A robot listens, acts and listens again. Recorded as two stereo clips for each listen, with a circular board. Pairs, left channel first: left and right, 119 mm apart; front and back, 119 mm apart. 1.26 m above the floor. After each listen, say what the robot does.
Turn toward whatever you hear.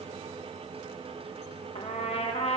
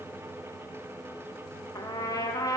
Turn 60° left.
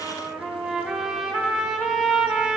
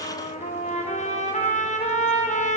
Facing the trumpet, under 1 m away.